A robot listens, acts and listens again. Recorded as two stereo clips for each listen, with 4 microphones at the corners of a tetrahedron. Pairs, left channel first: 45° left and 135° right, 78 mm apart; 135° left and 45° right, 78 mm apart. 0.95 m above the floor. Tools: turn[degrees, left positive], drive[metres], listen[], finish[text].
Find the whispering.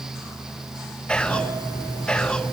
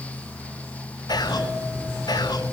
Thought: The whispering: 120° left.
Action: turn[120]
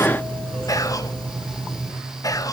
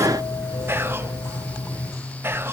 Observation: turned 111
Thought: The whispering is now 10° left.
Action: turn[10]
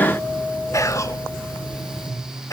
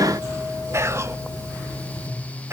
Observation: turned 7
Action: finish[Facing the whispering, under 1 m away.]